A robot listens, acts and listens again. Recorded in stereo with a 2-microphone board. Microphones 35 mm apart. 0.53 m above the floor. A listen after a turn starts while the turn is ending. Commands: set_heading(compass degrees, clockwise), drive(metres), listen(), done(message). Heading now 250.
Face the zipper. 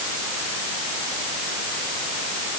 listen()
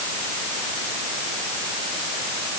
listen()
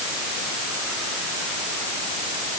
done("I can't make out a zipper.")